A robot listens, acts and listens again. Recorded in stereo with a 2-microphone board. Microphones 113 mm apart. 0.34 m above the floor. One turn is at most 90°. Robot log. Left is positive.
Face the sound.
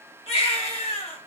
note: The baby crying: about 60° left or 120° left.
cmd yaw +60
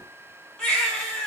end: Found it: a baby crying, straight ahead, 1 to 2 m away.